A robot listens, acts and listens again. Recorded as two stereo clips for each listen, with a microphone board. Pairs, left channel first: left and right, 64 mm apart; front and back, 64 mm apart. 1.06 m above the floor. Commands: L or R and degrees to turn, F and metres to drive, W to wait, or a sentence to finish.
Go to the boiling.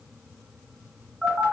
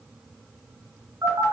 W
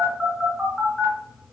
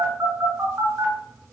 W
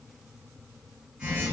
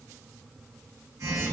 I can't make out boiling, only a phone buzzing.